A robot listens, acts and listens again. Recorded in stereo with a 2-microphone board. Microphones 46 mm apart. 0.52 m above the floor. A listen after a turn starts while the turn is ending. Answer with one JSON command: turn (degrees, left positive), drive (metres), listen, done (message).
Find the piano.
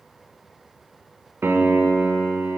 {"turn": -55}
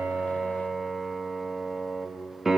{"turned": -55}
{"turn": -10}
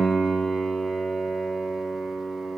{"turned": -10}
{"done": "Found it: a piano, straight ahead, 1 to 2 m away."}